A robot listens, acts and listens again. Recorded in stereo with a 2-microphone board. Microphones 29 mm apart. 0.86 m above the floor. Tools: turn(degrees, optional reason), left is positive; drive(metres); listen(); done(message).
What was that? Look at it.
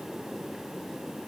listen()
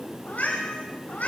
turn(degrees=75, reason="The cat meowing: about 75° left or 105° left.")
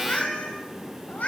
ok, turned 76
turn(degrees=65, reason="So it is at 65° left.")
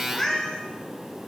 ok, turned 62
turn(degrees=20, reason="The cat meowing is now 20° left.")
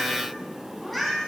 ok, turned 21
done("Found it: a cat meowing, straight ahead.")